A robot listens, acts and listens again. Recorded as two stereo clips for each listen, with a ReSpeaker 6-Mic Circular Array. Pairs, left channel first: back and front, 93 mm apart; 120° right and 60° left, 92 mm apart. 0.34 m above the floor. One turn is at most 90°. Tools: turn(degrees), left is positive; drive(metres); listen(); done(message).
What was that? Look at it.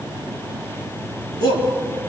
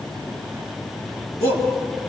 done("Facing the shout.")